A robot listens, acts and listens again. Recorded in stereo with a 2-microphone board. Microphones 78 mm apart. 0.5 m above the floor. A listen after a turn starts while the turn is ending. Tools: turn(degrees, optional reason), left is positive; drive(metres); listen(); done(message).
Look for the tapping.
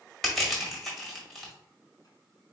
listen()
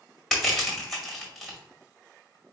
listen()
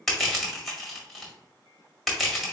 done("I can't make out tapping, only crushing.")